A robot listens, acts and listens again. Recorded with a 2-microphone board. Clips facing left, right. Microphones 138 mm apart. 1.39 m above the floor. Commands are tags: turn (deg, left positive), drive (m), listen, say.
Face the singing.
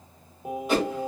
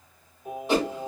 <turn deg="90"/>
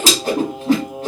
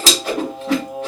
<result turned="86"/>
<say>Found it: singing, straight ahead, 1 to 2 m away.</say>